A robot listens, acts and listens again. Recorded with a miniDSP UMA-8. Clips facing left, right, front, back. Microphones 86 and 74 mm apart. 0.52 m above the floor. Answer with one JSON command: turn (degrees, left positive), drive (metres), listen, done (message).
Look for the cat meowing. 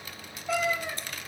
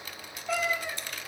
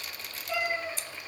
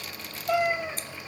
{"turn": 180}
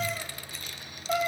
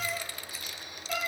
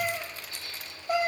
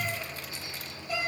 {"turn": 35}
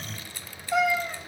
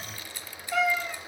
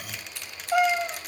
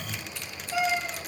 {"turn": 20}
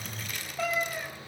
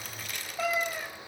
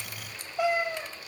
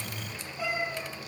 {"done": "Found it: a cat meowing, straight ahead, 1 to 2 m away."}